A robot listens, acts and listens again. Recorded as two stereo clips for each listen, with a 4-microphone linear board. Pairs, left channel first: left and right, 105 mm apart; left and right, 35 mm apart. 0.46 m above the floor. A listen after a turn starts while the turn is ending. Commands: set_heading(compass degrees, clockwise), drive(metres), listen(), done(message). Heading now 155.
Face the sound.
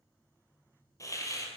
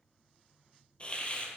set_heading(125)
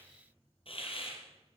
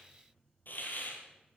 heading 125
set_heading(5)
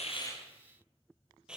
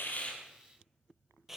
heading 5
set_heading(15)
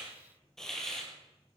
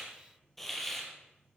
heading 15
done("Facing the hiss.")